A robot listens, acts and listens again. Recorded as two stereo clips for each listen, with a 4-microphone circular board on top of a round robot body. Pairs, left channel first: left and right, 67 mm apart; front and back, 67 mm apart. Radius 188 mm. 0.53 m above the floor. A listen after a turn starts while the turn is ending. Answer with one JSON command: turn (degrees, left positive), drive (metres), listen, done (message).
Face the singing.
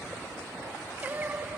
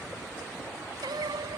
{"turn": -160}
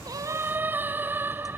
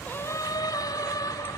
{"turn": -30}
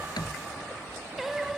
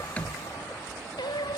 {"done": "Found it: singing, straight ahead."}